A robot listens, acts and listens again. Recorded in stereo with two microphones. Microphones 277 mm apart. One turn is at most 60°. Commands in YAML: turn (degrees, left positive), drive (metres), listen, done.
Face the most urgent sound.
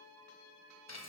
listen: true
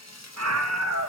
turn: -60
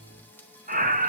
turn: -35
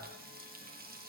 listen: true
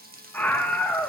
done: "Found it: a scream, straight ahead, under 1 m away."